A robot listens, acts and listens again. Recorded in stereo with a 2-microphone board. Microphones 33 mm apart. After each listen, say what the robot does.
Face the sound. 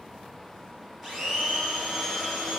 Turn 30° left.
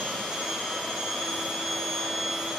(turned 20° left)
Turn 10° right.
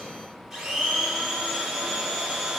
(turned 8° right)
Facing the blender.